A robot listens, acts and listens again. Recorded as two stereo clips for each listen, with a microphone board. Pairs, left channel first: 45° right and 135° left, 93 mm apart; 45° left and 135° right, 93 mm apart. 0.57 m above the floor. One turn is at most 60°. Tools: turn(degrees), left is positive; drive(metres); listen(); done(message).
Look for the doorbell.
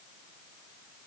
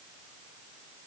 listen()
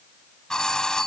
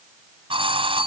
turn(degrees=-60)
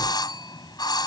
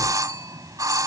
turn(degrees=-60)
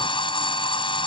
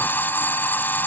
turn(degrees=-25)
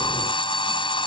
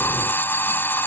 turn(degrees=-25)
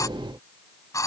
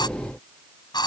done("Found it: a doorbell, straight ahead.")